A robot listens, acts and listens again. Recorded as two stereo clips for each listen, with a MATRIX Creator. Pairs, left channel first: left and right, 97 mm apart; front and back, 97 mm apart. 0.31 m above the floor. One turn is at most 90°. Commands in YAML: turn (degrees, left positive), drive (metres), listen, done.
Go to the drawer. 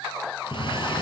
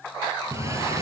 turn: -90
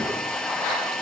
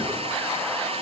turn: -85
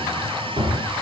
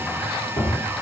turn: -50
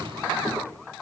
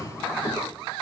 drive: 1.0
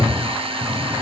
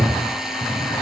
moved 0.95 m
drive: 1.0
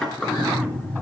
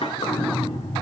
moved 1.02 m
drive: 1.0
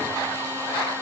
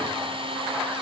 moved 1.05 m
listen: true
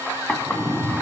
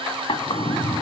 turn: 15
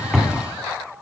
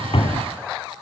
drive: 1.0
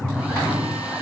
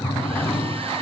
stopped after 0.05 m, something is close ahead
done: "I am next to the drawer."